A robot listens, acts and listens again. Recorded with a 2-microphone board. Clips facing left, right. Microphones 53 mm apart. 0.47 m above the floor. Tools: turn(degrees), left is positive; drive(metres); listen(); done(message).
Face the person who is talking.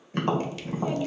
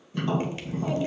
turn(degrees=30)
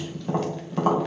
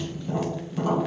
listen()
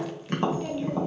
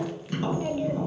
turn(degrees=-20)
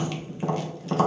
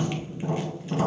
listen()
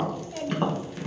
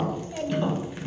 done("Facing the child speaking, 1 to 2 m away.")